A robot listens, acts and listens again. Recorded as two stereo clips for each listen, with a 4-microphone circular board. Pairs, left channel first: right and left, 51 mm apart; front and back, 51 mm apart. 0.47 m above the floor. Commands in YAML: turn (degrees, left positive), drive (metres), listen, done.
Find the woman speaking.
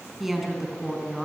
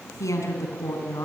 turn: 10
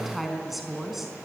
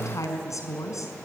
done: "Found it: a woman speaking, straight ahead, over 4 m away."